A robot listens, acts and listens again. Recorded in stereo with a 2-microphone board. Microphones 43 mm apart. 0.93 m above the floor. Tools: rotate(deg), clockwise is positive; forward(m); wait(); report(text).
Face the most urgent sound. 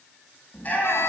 rotate(-35)
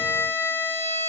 wait()
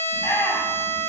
rotate(-110)
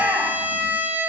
report("Found it: a shout, straight ahead, over 4 m away.")